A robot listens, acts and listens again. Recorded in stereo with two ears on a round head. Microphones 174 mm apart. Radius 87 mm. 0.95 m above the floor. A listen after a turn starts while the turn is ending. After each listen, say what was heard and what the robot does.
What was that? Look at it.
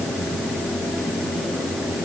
Keep listening.
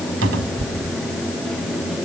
Turn 90° right.
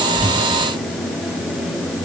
Keep listening.
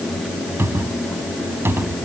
The cupboard door is now 10° right. Turn 10° right.
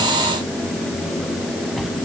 Facing the cupboard door.